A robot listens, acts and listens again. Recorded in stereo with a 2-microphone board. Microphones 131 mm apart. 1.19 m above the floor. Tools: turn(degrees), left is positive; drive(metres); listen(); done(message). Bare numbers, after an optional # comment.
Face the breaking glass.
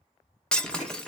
turn(30)
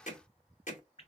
listen()
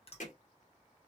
done("I heard breaking glass, but can't make it out now. It was about 25° right or 145° left.")